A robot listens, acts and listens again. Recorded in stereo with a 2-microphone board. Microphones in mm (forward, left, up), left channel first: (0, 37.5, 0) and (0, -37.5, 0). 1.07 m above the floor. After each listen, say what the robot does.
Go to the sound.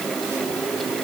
Keep listening.
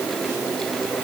Keep listening.
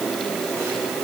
I can't make out anything.